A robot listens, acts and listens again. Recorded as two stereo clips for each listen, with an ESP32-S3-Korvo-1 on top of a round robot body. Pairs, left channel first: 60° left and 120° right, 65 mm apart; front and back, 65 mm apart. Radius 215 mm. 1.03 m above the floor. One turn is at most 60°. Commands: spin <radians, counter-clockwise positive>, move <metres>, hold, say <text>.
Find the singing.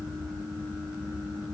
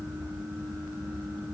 hold
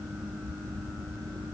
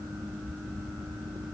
hold
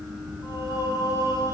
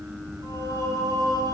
spin 0.70
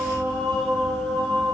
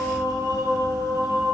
say Facing the singing, over 4 m away.